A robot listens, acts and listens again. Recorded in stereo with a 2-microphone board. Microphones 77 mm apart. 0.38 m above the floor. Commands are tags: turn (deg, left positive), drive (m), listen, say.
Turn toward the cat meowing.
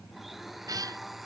<turn deg="-50"/>
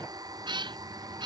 <turn deg="-80"/>
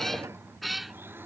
<say>Found it: a cat meowing, straight ahead.</say>